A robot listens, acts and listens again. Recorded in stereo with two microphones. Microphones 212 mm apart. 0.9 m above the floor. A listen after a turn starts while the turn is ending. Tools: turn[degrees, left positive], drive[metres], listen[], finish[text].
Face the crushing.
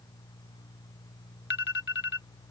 Action: listen[]
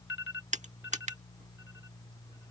Thought: The crushing: about 35° right or 145° right.
Action: turn[-35]
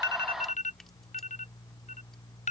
Action: listen[]
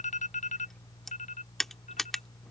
Action: finish[Facing the crushing.]